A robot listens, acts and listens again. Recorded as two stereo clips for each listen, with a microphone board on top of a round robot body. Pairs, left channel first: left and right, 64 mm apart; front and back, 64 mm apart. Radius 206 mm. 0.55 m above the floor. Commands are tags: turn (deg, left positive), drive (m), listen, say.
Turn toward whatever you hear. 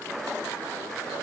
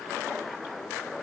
<listen/>
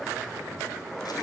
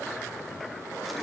<listen/>
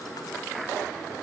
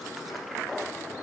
<say>I can't make out anything to turn to.</say>